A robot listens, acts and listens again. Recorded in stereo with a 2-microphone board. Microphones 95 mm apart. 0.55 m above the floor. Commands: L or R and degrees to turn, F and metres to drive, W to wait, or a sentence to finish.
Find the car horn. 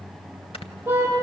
R25
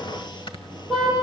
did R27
Found it: a car horn, straight ahead, over 4 m away.